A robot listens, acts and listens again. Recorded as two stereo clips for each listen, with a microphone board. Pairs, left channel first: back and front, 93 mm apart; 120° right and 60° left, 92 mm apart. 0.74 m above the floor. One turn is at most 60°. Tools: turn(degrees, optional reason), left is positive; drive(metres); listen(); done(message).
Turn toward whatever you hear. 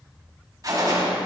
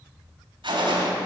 turn(degrees=45, reason="The gunshot: 45° left.")
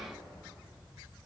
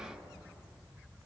done("I heard a gunshot from this way, but can't make it out now.")